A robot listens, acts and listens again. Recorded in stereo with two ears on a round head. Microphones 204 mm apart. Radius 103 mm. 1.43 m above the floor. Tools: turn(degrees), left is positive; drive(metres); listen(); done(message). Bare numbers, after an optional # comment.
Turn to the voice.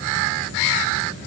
listen()
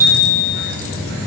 listen()
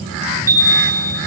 done("I can't make out anyone speaking, only a chime.")